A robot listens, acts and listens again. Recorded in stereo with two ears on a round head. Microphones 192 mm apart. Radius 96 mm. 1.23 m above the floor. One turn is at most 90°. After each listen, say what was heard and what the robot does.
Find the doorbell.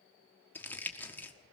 Keep listening.
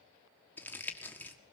Keep listening.
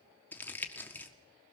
I can't make out a doorbell, only crumpling.